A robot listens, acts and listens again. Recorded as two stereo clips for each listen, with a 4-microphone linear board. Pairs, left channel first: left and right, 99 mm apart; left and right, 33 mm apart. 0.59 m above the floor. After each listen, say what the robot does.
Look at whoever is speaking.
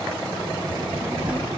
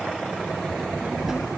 Turn 30° right.
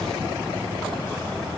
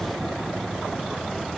Turn 20° left.
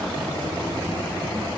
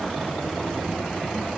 Keep listening.
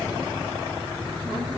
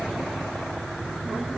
Turn 15° left.
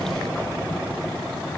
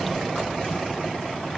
Keep listening.
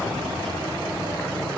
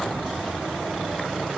Facing the child speaking.